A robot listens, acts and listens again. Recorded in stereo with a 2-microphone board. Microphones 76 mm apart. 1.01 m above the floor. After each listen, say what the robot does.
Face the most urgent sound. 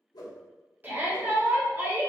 Turn 25° right.
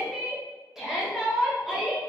Facing the shout.